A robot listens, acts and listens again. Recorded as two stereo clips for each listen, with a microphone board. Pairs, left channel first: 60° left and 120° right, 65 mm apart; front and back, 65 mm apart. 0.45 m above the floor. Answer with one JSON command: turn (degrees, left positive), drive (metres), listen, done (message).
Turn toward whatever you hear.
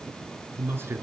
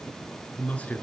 {"turn": -70}
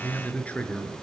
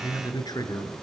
{"turn": -10}
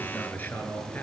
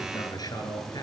{"done": "Facing the man speaking, over 4 m away."}